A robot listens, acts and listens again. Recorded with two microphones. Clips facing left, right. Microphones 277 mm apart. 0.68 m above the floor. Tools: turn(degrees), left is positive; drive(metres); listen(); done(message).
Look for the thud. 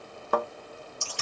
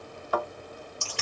turn(degrees=55)
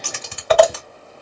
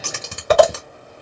listen()
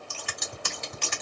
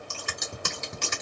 done("I heard a thud, but can't make it out now. It was about straight ahead or 70° left.")